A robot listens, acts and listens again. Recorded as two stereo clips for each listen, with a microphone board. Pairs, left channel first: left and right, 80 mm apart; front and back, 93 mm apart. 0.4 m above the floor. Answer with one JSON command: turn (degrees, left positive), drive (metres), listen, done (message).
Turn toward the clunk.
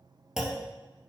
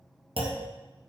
{"turn": -175}
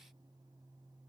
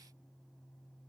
{"done": "I heard a clunk from this way, but can't make it out now."}